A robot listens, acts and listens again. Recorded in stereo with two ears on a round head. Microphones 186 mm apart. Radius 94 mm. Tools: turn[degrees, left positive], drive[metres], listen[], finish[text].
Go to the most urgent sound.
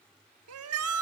Action: turn[-90]
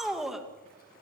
Action: drive[1.0]
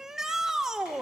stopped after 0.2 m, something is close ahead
Action: finish[Something is in my way. I am facing the shout but have not reached it.]